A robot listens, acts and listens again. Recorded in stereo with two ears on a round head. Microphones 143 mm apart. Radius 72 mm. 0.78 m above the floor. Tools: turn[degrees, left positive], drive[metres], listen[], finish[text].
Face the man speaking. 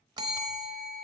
Action: listen[]
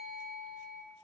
Action: listen[]
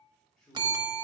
Action: turn[30]
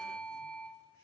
Thought: So it is at 160° left.
Action: turn[160]
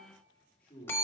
Thought: The man speaking is now 15° left.
Action: turn[15]
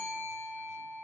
Action: listen[]
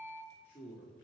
Thought: The man speaking is now 10° left.
Action: turn[10]
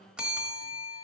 Action: listen[]
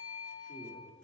Action: listen[]
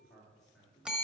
Action: finish[Facing the man speaking.]